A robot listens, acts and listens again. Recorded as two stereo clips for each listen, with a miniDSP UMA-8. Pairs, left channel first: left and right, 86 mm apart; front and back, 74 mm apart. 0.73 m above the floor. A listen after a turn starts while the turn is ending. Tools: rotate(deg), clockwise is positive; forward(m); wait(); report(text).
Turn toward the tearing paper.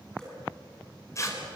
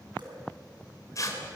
rotate(-40)
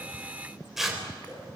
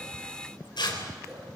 report("Found it: tearing paper, straight ahead, 2 to 4 m away.")